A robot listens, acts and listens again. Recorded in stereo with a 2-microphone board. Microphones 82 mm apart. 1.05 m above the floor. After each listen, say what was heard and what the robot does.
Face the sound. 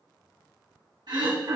The throat clearing: about 60° right or 120° right. Turn 60° right.
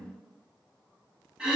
So it is at 10° right. Turn 10° right.
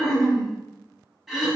Facing the throat clearing.